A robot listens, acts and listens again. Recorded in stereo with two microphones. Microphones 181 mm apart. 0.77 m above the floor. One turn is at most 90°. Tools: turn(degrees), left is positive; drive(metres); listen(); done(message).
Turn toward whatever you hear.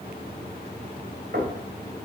turn(degrees=-70)
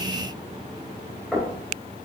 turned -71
done("Found it: knocking, straight ahead.")